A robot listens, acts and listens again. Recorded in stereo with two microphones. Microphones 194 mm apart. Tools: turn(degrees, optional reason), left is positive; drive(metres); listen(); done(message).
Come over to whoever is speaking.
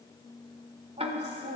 turn(degrees=-40, reason="The woman speaking: about 40° right or 140° right.")
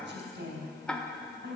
turn(degrees=-100, reason="So it is at 100° right.")
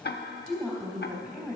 drive(metres=1.0)
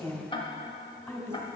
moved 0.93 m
turn(degrees=10, reason="The woman speaking is now 10° left.")
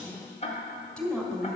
drive(metres=1.0)
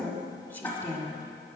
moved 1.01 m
turn(degrees=10, reason="The woman speaking is now 10° left.")
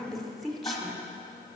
drive(metres=1.0)
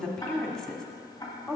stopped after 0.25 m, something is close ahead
done("I am next to the woman speaking.")